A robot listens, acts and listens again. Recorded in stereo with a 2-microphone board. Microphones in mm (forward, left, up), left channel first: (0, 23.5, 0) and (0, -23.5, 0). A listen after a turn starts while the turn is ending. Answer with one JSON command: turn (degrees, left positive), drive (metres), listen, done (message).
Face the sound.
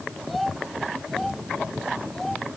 {"turn": 30}
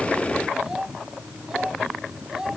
{"turn": -15}
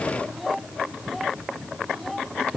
{"done": "Facing the child speaking."}